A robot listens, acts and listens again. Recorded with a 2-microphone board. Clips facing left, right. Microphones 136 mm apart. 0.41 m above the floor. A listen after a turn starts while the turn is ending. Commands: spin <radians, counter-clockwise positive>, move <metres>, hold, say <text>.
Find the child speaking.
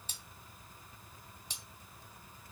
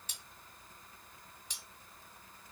hold
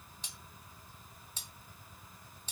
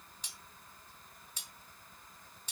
hold
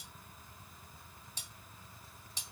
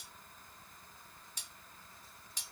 say I can't make out a child speaking, only cutlery clinking.